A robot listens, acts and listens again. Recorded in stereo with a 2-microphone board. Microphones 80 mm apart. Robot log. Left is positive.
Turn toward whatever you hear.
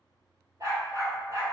note: The dog barking: about 40° right or 140° right.
cmd yaw -40
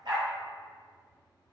note: So it is at 95° right.
cmd yaw -95
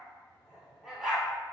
end: Facing the dog barking.